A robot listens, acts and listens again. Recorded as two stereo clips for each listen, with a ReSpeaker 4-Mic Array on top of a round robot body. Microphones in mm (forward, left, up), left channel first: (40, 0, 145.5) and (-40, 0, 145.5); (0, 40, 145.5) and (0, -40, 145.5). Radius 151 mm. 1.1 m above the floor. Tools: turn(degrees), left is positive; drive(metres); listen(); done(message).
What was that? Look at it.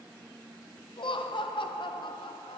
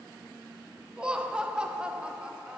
turn(degrees=-10)
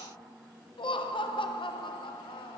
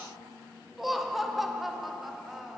done("Facing the laughter.")